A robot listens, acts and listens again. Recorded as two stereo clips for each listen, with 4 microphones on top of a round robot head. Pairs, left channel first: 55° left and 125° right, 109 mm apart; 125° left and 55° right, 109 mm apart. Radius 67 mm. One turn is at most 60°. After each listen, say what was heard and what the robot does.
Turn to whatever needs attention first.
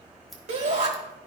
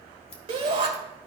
The shout: 100° right. Turn 60° right.
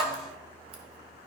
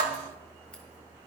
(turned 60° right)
The shout is now 40° right. Turn 40° right.
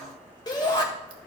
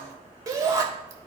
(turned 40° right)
Facing the shout.